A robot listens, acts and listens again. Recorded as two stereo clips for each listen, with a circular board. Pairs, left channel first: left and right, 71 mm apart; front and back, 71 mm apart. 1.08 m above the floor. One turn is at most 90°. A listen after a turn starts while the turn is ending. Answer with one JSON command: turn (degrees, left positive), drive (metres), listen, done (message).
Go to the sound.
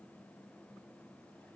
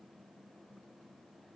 {"listen": true}
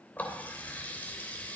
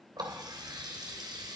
{"turn": 90}
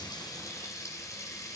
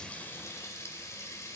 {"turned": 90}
{"turn": 50}
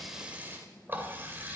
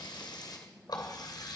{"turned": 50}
{"turn": -30}
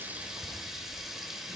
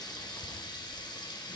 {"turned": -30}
{"drive": 1.0}
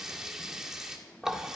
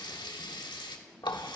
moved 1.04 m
{"drive": 1.0}
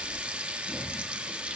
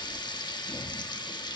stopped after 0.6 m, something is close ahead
{"turn": -15}
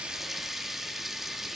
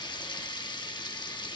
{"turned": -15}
{"done": "I am next to the running tap."}